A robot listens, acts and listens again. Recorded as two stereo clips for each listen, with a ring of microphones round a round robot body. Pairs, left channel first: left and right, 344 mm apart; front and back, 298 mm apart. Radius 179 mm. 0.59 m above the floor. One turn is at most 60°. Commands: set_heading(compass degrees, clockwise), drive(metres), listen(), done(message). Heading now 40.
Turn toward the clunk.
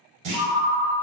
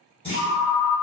set_heading(100)
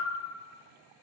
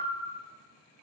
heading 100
set_heading(115)
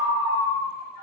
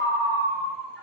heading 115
done("I heard a clunk from this way, but can't make it out now.")